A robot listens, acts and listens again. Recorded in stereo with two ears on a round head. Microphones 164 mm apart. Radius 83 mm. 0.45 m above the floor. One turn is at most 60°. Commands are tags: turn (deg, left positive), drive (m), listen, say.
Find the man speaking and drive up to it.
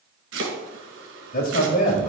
<turn deg="50"/>
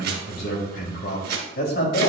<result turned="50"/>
<turn deg="60"/>
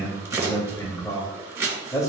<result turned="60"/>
<turn deg="20"/>
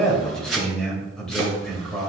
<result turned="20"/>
<drive m="1.0"/>
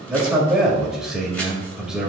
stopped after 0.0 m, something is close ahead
<say>Something is in my way. I am facing the man speaking but have not reached it.</say>